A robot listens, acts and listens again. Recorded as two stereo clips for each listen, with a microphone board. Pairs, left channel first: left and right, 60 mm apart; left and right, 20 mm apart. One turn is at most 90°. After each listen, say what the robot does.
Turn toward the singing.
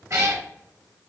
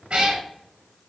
Keep listening.
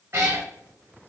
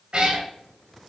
Keep listening.
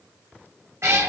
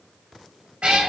I can't make out singing, only a cat meowing.